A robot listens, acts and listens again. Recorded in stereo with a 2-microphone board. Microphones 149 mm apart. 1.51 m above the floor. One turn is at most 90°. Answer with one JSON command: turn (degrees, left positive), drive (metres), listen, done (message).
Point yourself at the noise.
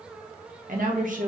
{"turn": -60}
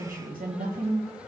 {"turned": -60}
{"turn": -80}
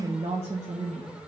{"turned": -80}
{"turn": -45}
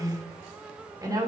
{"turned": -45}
{"turn": -25}
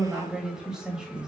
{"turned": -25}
{"done": "Found it: a woman speaking, straight ahead."}